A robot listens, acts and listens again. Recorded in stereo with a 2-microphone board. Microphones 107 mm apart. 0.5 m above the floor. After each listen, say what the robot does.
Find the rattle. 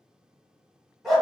Keep listening.
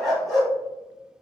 Keep listening.
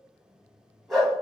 I can't make out a rattle, only a dog barking.